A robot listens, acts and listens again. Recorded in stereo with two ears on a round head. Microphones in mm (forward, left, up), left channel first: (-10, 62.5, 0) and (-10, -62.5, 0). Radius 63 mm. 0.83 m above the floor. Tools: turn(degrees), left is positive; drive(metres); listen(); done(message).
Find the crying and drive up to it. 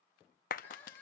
turn(degrees=15)
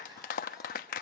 listen()
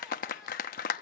listen()
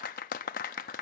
done("I heard crying, but can't make it out now. It was about straight ahead or 150° left. I did not reach it.")